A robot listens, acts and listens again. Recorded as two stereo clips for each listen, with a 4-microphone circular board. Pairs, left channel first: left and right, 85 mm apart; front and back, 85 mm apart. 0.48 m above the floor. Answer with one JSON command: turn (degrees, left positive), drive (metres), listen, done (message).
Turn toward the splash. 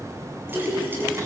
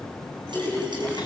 {"turn": -155}
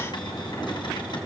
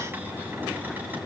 {"done": "Facing where the splash came from. I can't hear it now."}